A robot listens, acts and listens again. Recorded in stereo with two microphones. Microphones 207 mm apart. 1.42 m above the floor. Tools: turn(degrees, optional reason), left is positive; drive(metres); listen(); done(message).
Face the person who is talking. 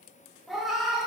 listen()
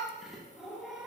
listen()
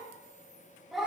done("I can't make out anyone speaking to turn to.")